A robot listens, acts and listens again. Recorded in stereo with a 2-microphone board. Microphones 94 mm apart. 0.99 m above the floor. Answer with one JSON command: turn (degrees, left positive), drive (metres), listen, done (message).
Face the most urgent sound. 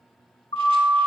{"turn": 55}
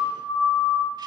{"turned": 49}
{"turn": 75}
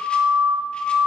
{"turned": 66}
{"turn": 10}
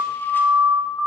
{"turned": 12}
{"done": "Facing the siren."}